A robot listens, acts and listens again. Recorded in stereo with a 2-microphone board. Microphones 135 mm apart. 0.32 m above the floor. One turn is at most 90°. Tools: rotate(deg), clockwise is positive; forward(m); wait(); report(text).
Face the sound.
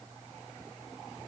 wait()
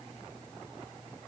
wait()
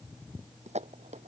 rotate(55)
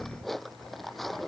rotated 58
report("Facing the dishes clattering.")